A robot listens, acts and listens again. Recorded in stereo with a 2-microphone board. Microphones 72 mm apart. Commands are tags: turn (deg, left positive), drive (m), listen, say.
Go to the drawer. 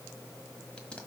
<listen/>
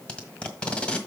<listen/>
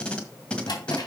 <turn deg="70"/>
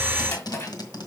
<turn deg="40"/>
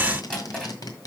<turn deg="10"/>
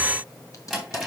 <drive m="1.0"/>
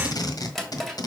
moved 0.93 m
<drive m="1.0"/>
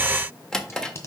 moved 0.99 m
<turn deg="10"/>
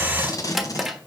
<drive m="1.0"/>
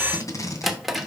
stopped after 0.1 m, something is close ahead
<say>Arrived at the drawer, straight ahead.</say>